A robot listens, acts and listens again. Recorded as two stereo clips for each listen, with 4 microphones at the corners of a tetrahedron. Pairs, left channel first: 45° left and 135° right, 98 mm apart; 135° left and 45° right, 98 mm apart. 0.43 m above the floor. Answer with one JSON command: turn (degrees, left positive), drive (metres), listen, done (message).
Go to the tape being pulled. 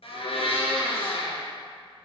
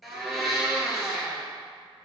{"listen": true}
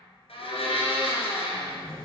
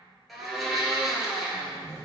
{"turn": 75}
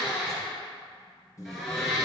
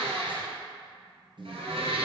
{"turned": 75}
{"turn": -10}
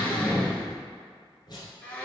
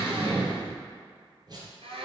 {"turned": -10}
{"drive": 1.0}
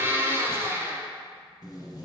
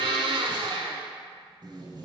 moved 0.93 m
{"drive": 1.0}
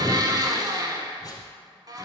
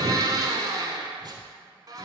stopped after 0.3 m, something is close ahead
{"done": "I am next to the tape being pulled."}